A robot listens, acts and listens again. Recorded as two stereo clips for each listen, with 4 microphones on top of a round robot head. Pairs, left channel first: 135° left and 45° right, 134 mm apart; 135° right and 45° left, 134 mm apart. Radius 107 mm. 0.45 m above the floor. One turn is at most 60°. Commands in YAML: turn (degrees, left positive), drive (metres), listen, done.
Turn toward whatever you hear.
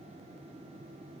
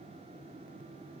listen: true
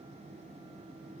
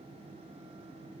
listen: true
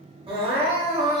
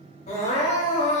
turn: -60
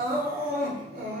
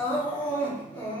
turn: -60
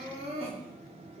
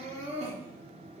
done: "Facing the crying."